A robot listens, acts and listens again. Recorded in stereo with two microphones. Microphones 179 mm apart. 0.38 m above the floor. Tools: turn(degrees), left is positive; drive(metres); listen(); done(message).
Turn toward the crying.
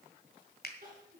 turn(degrees=-50)
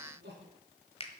turn(degrees=-80)
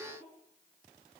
turn(degrees=-10)
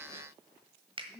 done("Found it: crying, straight ahead, over 4 m away.")